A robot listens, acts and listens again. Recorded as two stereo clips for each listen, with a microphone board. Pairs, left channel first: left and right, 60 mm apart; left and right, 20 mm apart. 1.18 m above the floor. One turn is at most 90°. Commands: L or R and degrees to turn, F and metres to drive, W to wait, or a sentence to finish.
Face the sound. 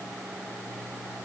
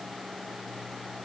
W
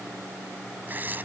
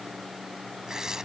R30
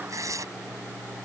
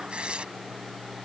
R90
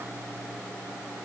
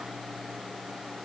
R25
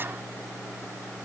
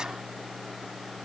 W
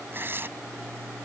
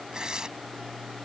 R35
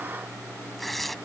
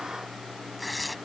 Found it: tearing paper, straight ahead.